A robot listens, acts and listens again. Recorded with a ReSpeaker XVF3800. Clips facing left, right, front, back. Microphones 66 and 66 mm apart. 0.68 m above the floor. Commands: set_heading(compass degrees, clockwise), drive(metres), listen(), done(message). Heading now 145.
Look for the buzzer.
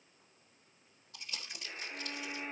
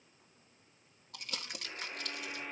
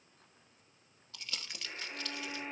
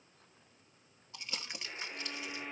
set_heading(195)
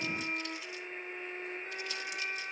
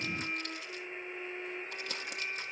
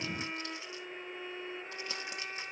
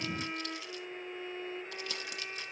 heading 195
listen()
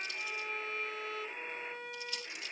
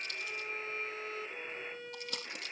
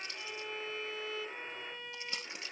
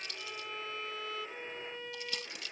done("Found it: a buzzer, straight ahead, over 4 m away.")